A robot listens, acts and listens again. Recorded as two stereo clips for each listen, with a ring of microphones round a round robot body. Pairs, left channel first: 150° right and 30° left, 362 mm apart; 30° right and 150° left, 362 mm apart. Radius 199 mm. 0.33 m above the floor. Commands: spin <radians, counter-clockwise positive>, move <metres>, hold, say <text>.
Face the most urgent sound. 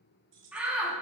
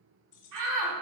spin 2.01
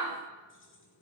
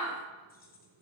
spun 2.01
spin 0.87
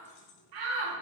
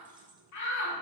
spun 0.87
spin 0.17
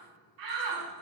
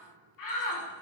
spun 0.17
say Facing the shout.